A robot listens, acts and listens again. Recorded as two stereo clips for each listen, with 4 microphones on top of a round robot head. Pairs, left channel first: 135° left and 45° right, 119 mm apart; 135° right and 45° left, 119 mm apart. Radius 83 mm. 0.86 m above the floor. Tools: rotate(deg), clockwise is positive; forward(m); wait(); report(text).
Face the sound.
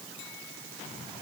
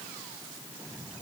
wait()
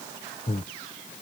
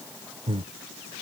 rotate(-95)
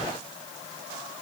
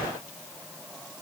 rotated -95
wait()
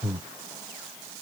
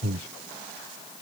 rotate(-30)
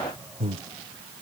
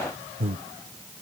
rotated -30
report("Facing the breathing.")